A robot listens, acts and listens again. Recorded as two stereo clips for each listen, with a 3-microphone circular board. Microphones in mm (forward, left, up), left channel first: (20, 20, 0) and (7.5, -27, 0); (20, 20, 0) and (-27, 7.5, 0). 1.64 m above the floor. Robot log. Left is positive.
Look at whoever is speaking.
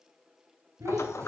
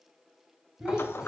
note: The child speaking: 85° right.
cmd yaw -85
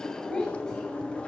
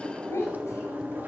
end: Found it: a child speaking, straight ahead.